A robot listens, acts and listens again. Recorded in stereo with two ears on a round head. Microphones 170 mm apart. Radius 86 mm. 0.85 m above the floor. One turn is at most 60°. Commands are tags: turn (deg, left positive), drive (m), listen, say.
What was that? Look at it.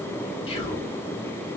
<turn deg="30"/>
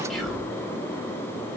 <say>Facing the whispering, 1 to 2 m away.</say>